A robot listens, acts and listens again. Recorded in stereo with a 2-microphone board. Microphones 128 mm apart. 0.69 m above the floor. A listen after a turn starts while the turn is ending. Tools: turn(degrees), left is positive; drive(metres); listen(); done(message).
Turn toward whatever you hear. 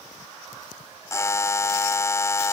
turn(degrees=20)
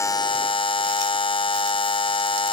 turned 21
turn(degrees=140)
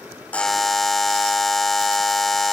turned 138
done("Found it: a buzzer, straight ahead.")